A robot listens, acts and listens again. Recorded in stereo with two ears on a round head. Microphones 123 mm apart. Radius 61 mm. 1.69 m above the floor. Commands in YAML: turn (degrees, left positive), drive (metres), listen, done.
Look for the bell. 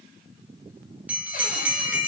turn: -30
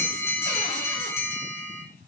turn: 20
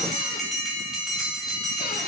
done: "Found it: a bell, straight ahead, 2 to 4 m away."